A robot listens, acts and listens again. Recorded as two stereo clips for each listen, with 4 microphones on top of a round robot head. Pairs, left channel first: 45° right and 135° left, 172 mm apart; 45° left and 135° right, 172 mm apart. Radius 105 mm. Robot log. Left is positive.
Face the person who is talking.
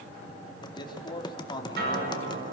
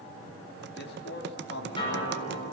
note: The man speaking: 20° left.
cmd yaw +20
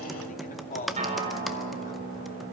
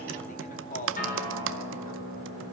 end: Facing the man speaking.